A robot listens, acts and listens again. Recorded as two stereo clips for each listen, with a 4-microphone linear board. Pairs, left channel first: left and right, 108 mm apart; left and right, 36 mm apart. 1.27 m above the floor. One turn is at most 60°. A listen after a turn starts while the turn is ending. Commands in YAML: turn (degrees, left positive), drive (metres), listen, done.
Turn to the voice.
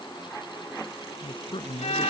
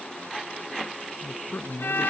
turn: 50
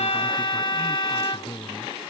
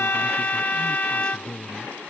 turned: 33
turn: 20
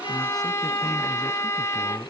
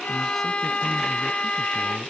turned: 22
listen: true
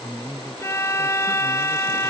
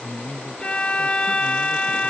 done: "Found it: a man speaking, straight ahead."